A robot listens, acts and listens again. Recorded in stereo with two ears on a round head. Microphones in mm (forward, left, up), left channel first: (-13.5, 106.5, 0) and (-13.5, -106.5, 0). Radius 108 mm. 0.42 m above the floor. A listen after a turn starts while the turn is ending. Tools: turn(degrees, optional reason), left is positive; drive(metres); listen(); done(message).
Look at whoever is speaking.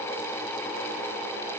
listen()
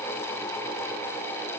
listen()
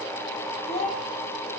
turn(degrees=30, reason="The child speaking: about 30° left or 150° left.")
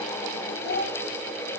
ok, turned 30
turn(degrees=135, reason="So it is at 135° left.")
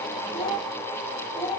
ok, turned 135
turn(degrees=15, reason="The child speaking is now 15° left.")
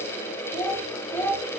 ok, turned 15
done("Facing the child speaking.")